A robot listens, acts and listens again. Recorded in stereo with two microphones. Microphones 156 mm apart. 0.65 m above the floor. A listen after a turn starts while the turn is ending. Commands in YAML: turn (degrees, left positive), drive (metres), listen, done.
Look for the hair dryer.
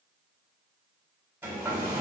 turn: -30
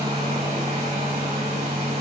turn: -135
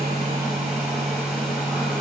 done: "Found it: a hair dryer, straight ahead, 1 to 2 m away."